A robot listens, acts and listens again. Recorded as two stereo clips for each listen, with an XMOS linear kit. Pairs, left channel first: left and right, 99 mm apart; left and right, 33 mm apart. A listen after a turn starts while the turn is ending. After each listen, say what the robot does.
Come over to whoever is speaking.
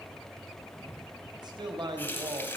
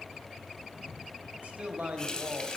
Turn 50° right.
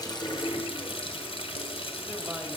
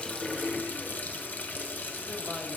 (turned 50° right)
Keep listening.
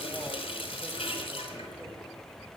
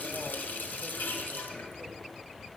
Keep listening.
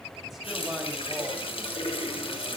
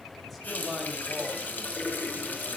I heard a man speaking, but can't make it out now. It was about straight ahead or 80° right. I did not reach it.